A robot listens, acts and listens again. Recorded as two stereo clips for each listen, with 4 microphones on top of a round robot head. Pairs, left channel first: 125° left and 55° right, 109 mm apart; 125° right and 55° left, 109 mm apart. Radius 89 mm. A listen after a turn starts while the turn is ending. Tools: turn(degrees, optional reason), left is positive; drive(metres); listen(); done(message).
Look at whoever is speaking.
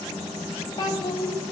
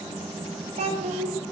turn(degrees=70, reason="The child speaking: 70° left.")
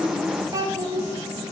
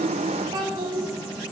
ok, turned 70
done("Facing the child speaking.")